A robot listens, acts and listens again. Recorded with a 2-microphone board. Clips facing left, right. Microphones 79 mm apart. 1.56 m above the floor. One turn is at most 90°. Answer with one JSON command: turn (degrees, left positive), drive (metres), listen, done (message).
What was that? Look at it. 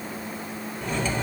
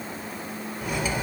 {"turn": -30}
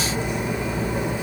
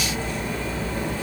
{"turn": 20}
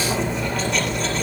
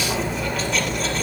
{"done": "Found it: cutlery clinking, straight ahead."}